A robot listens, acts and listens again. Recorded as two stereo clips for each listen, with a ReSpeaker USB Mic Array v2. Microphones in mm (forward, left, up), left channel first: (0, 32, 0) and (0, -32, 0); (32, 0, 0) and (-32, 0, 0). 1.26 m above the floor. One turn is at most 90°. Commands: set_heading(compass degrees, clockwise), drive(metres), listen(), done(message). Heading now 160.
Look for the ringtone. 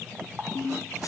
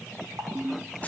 set_heading(70)
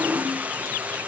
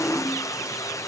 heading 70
set_heading(20)
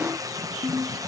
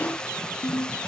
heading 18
done("Facing the ringtone.")